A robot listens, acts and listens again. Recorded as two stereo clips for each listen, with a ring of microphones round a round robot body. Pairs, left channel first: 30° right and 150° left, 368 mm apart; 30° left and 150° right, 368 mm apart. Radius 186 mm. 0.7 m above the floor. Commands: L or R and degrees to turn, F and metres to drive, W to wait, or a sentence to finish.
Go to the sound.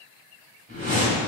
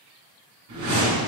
R145
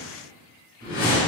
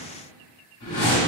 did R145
L25
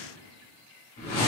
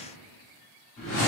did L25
F1.0
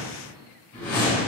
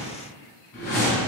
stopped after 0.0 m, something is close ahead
Blocked. The whoosh is further on, straight ahead.